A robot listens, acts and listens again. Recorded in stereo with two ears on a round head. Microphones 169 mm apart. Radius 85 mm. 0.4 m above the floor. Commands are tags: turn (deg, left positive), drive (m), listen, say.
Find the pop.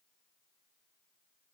<listen/>
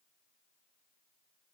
<listen/>
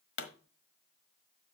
<turn deg="65"/>
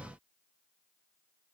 <listen/>
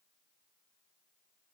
<say>I heard a pop, but can't make it out now. It was about straight ahead or 50° left.</say>